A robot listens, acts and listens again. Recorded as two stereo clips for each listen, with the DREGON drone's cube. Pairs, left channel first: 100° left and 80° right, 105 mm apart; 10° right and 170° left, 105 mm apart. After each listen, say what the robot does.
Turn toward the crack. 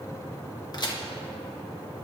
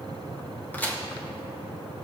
Turn 60° left.
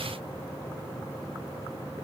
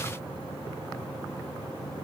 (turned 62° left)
Facing where the crack came from. I can't hear it now.